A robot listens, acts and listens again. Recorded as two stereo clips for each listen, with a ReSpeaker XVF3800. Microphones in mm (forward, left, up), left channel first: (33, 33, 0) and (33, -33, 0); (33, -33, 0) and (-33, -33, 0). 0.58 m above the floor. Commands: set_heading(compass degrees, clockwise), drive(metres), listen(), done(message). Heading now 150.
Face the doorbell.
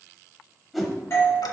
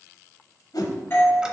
set_heading(100)
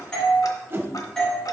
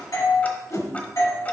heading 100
set_heading(90)
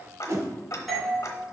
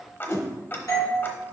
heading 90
done("Facing the doorbell.")